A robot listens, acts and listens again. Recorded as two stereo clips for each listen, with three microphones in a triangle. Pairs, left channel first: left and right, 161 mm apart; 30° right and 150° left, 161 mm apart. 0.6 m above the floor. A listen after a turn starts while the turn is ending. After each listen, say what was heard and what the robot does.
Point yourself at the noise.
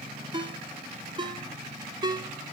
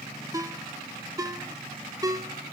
The ringtone: 145° right. Turn 145° right.
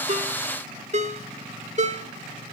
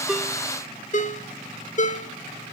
The ringtone is now 55° right. Turn 55° right.
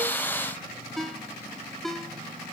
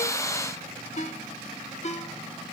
Facing the ringtone, under 1 m away.